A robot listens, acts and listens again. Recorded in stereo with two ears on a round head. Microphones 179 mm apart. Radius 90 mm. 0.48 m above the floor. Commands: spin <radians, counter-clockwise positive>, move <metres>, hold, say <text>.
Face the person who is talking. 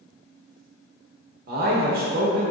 spin -0.79
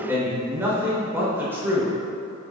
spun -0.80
spin -0.26
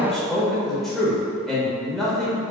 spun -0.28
say Facing the man speaking, 1 to 2 m away.